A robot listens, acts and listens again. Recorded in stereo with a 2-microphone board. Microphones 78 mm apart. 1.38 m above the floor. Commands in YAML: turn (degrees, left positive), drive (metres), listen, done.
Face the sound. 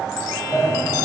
turn: 25
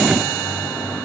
listen: true
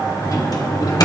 turn: 130
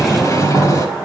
turn: 40
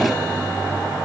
done: "Found it: a sliding door, straight ahead."